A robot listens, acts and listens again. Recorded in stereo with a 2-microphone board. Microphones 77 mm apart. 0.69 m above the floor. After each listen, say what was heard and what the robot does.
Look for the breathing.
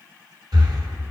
The breathing: about 70° right or 110° right. Turn 70° right.
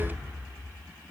Keep listening.
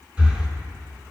So it is at 20° right. Turn 20° right.
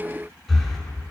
Found it: breathing, straight ahead, 1 to 2 m away.